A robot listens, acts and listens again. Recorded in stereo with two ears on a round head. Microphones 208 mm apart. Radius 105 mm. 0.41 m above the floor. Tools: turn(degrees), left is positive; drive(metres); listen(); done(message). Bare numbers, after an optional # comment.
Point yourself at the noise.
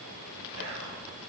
# The whispering: about 70° right or 110° right.
turn(-70)
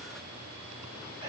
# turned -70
listen()
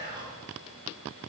# So it is at 25° right.
turn(-25)
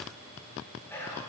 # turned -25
# The whispering is now 10° left.
turn(10)
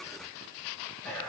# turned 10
done("Found it: whispering, straight ahead, 2 to 4 m away.")